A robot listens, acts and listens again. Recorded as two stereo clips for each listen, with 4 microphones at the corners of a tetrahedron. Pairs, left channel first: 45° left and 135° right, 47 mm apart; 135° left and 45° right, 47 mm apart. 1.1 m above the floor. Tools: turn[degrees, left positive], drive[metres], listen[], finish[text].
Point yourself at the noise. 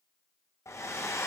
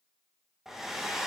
Thought: The hair dryer: 35° left.
Action: turn[35]
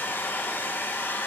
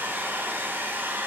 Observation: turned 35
Action: finish[Facing the hair dryer.]